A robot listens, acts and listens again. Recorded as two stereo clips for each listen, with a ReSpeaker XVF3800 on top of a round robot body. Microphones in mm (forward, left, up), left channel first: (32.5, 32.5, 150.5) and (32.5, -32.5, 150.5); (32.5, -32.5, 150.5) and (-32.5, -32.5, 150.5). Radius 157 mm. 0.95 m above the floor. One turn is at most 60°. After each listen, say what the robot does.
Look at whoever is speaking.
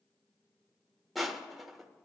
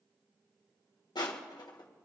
Keep listening.
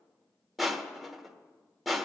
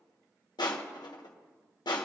Keep listening.
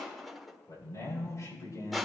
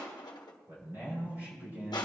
Turn 60° left.
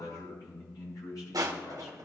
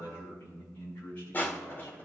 Turn 60° left.
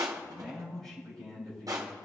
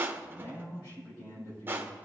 Facing the man speaking.